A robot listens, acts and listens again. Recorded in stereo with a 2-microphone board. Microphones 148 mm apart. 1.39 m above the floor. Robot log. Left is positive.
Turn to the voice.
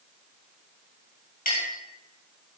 cmd idle
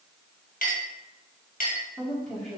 cmd yaw +30
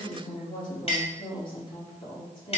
note: So it is at 145° left.
cmd yaw +145
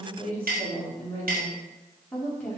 note: The woman speaking is now 10° left.
cmd yaw +10
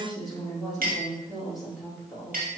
end: Found it: a woman speaking, straight ahead, 2 to 4 m away.